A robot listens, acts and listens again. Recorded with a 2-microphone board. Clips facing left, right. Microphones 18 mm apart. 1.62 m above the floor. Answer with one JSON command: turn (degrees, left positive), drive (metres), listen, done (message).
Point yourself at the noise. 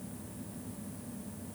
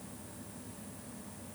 {"listen": true}
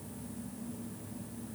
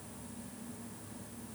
{"listen": true}
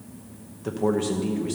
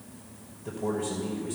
{"turn": 90}
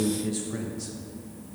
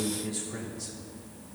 {"turn": 15}
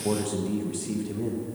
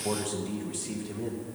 {"done": "Found it: a man speaking, straight ahead, under 1 m away."}